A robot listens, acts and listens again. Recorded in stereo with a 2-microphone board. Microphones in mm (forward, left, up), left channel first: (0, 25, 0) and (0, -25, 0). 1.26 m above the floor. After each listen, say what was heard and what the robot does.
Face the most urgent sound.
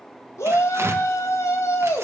Turn 90° left.
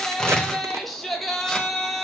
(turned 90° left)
Found it: a shout, straight ahead.